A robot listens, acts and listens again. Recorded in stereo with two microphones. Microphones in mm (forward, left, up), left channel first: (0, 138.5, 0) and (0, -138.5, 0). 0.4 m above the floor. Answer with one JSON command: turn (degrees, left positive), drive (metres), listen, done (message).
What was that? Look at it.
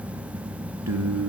{"turn": -90}
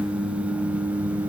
{"turn": -10}
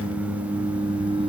{"turn": -20}
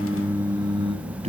{"turn": -25}
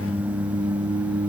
{"turn": -15}
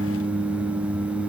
{"done": "Found it: singing, straight ahead."}